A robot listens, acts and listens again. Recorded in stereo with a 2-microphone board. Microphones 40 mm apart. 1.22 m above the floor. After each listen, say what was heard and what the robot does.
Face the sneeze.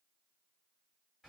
Keep listening.
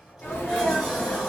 Turn 90° left.
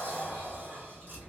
I heard a sneeze from this way, but can't make it out now.